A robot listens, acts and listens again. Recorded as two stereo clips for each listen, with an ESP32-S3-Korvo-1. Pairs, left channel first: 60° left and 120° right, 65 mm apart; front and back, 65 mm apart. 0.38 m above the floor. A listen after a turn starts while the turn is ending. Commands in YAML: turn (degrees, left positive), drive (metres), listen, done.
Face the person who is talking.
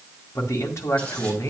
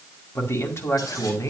turn: 30
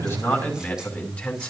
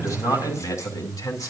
turn: -10
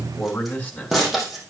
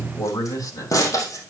done: "Found it: a man speaking, straight ahead, 2 to 4 m away."